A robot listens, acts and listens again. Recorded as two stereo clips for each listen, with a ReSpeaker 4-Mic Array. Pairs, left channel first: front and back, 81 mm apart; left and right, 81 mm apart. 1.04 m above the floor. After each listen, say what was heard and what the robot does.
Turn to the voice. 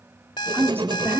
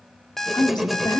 The man speaking: 120° left. Turn 120° left.
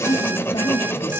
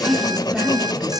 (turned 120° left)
Facing the man speaking, 2 to 4 m away.